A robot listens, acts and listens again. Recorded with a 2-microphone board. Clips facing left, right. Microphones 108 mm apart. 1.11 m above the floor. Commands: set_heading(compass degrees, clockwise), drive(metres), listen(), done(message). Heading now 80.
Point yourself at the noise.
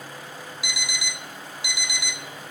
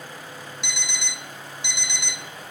set_heading(50)
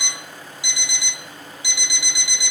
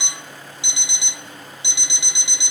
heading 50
set_heading(75)
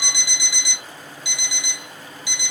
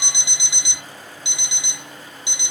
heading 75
set_heading(100)
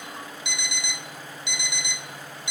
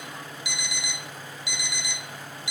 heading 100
done("Found it: an alarm clock, straight ahead, 1 to 2 m away.")